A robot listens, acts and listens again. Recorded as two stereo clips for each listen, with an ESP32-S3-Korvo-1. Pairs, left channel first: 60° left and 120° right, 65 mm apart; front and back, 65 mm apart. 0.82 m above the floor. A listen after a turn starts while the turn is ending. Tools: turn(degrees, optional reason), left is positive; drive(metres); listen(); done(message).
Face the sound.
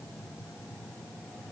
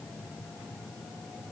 listen()
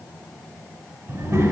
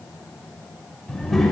turn(degrees=-85, reason="The child speaking: 85° right.")
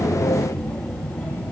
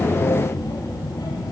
turn(degrees=-15, reason="The child speaking is now 15° right.")
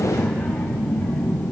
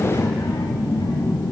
turn(degrees=-10, reason="The child speaking is now 10° right.")
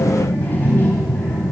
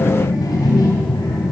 done("Facing the child speaking.")